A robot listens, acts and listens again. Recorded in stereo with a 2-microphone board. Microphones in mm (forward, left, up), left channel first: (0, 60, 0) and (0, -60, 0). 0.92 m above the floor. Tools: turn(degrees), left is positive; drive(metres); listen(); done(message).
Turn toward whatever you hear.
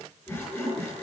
turn(degrees=15)
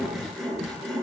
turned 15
done("Found it: sawing, straight ahead.")